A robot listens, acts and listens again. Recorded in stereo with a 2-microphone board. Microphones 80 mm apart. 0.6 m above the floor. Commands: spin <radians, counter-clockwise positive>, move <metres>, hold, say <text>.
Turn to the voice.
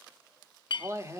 spin -0.61
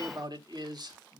spin -1.75
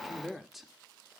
say Found it: a man speaking, straight ahead, 1 to 2 m away.